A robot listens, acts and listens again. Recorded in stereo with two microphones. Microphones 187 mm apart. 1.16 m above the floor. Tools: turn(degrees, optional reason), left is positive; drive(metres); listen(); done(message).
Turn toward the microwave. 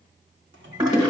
turn(degrees=-75, reason="The microwave: about 75° right or 105° right.")
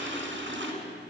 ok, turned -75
listen()
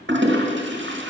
listen()
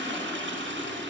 done("I heard a microwave, but can't make it out now. It was about straight ahead or 30° right.")